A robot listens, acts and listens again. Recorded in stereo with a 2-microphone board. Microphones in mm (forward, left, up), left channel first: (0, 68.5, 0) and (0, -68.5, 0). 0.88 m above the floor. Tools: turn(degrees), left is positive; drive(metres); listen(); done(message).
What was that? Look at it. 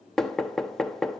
turn(degrees=30)
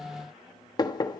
turn(degrees=150)
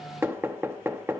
turn(degrees=-15)
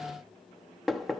done("Facing the knocking, 1 to 2 m away.")